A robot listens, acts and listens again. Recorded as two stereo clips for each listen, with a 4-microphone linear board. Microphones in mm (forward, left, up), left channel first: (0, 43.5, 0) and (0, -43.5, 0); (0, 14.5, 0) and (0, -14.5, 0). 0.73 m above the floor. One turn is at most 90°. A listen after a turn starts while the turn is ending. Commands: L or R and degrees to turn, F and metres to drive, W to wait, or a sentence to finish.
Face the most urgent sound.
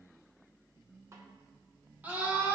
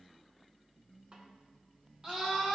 R20
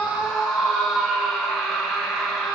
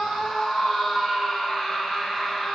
Facing the scream.